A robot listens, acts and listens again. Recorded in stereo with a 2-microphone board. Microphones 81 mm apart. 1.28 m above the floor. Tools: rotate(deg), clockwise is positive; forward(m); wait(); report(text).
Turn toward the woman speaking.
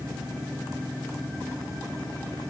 wait()
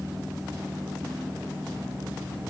wait()
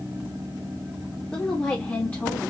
rotate(-20)
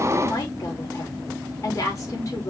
rotate(-130)
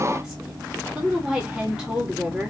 rotate(15)
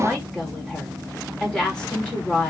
report("Facing the woman speaking, 2 to 4 m away.")